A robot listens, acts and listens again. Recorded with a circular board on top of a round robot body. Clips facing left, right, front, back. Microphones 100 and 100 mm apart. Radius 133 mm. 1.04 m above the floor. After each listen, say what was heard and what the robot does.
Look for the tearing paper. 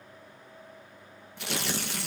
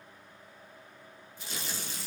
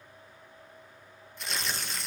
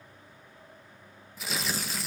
The tearing paper: 95° left. Turn 95° left.
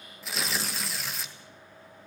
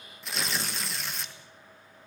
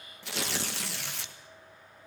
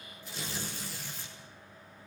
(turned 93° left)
Facing the tearing paper.